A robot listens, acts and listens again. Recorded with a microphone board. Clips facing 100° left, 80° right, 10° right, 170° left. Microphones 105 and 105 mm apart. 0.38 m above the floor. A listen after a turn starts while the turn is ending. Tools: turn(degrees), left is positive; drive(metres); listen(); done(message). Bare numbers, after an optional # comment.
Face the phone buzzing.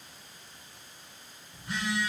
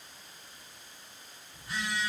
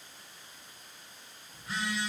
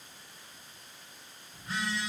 # The phone buzzing: 75° left.
turn(75)
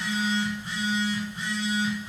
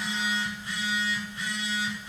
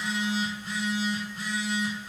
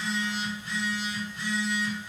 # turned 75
# The phone buzzing is now 30° left.
turn(30)
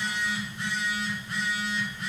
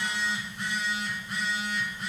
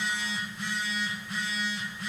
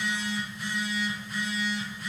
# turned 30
done("Facing the phone buzzing, 1 to 2 m away.")